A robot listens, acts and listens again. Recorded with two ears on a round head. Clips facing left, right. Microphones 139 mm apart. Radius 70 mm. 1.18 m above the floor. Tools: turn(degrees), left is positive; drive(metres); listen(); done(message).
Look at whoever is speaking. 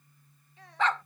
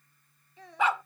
turn(degrees=-90)
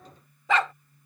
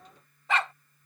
listen()
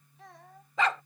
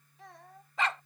done("Facing the child speaking.")